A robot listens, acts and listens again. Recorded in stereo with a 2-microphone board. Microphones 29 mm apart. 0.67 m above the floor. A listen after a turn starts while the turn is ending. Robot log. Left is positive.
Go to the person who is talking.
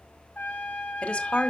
note: The woman speaking: about 55° left or 125° left.
cmd yaw +55
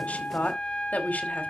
note: So it is at 65° left.
cmd yaw +65
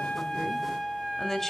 cmd fwd 1.0
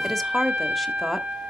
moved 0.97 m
cmd fwd 1.0
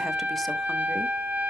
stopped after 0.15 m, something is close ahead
cmd idle
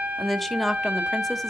end: I am next to the woman speaking.